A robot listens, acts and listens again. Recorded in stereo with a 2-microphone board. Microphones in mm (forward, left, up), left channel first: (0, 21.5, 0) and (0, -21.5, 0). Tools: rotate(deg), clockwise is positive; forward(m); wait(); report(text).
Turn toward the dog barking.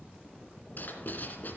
wait()
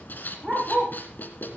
rotate(30)
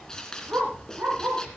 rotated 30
rotate(120)
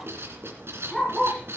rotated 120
report("Facing the dog barking, over 4 m away.")